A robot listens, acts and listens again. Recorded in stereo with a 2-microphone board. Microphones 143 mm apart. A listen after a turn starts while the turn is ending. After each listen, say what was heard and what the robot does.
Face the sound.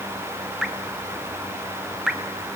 Turn 30° right.
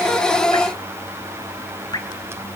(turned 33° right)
So it is at 30° left. Turn 30° left.
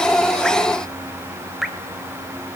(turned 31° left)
Found it: dripping, straight ahead.